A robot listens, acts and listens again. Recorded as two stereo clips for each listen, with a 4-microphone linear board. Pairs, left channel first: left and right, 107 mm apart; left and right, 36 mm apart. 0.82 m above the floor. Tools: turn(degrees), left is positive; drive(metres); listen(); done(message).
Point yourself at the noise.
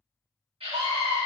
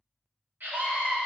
turn(degrees=-65)
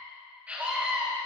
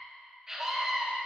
turn(degrees=-15)
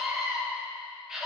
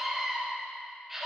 done("Facing the scream.")